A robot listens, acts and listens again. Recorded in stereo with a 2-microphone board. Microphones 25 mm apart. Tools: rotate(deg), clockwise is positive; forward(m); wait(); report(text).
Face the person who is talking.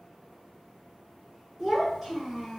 rotate(30)
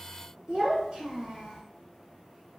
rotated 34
rotate(135)
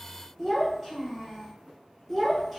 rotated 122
rotate(15)
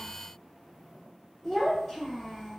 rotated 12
report("Facing the child speaking, under 1 m away.")